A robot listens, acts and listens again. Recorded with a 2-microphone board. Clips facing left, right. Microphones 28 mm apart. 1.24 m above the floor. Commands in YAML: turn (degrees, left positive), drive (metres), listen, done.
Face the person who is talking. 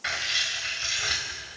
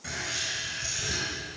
listen: true
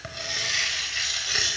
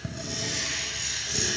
listen: true
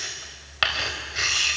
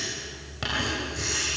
done: "I can't make out anyone speaking, only writing."